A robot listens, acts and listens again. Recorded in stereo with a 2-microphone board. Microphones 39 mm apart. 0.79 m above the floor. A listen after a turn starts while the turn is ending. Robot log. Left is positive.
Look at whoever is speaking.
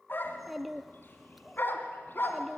cmd yaw +30
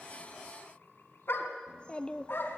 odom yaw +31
note: So it is at 150° left.
cmd yaw +150
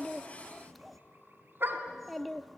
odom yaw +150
end: Facing the child speaking, under 1 m away.